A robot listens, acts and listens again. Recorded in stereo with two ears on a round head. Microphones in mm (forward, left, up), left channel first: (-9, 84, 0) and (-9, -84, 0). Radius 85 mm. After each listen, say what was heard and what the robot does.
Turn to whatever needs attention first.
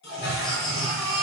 The baby crying: about 25° left or 155° left. Turn 25° left.
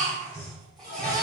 Found it: a baby crying, straight ahead, 2 to 4 m away.